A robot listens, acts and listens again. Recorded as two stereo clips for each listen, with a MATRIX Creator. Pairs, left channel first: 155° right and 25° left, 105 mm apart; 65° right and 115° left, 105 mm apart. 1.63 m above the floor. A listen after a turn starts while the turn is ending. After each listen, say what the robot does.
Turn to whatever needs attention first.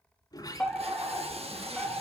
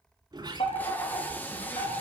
Turn 75° right.
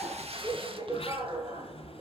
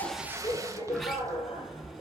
Turn 25° right.
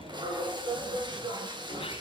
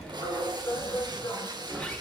Turn 15° right.
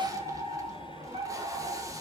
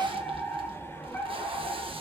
Facing the fire alarm.